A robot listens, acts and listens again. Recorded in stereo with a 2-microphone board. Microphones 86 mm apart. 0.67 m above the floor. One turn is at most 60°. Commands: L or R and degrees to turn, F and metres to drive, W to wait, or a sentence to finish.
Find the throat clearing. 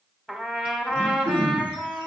R25
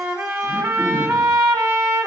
W
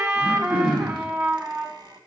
Facing the throat clearing.